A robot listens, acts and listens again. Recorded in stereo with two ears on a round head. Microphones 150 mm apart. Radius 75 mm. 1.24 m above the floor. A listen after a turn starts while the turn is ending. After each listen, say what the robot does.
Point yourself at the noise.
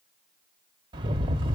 Turn 25° right.
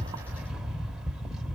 Found it: a rattle, straight ahead, 1 to 2 m away.